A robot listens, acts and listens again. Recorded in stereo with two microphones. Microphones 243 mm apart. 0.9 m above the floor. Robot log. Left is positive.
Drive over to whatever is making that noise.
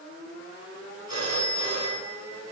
cmd yaw +90
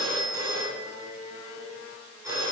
note: So it is at 10° right.
cmd yaw -10
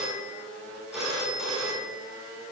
cmd fwd 1.0
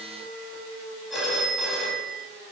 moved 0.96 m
cmd fwd 1.0
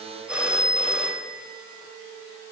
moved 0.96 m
cmd fwd 1.0
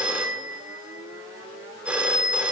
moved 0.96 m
cmd fwd 1.0
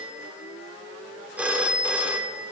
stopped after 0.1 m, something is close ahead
end: I am next to the phone ringing.